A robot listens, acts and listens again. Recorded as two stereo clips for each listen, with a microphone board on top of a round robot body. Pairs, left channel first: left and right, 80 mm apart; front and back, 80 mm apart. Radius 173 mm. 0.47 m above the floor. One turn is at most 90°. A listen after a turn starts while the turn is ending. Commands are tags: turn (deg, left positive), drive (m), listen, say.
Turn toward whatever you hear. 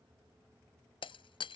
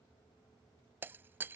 <turn deg="90"/>
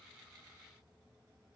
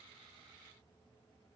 <turn deg="25"/>
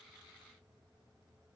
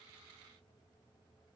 <say>I heard breaking glass from this way, but can't make it out now.</say>